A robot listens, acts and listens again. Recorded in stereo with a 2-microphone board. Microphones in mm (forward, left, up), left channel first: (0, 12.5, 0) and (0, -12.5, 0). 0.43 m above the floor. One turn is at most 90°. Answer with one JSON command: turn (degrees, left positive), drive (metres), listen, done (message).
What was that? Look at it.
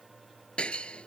{"turn": 45}
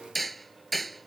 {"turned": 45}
{"done": "Facing the hammering."}